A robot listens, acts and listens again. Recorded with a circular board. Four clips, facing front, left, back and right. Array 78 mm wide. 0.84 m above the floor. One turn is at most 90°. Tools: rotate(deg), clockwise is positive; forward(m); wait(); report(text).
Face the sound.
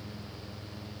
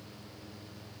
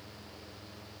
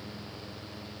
wait()
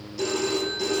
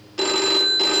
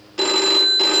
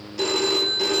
rotate(-90)
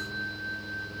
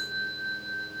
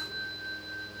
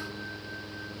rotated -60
rotate(-90)
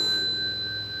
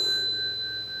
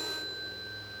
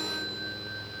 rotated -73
rotate(-20)
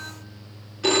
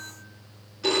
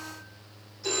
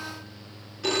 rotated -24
report("Found it: a phone ringing, straight ahead.")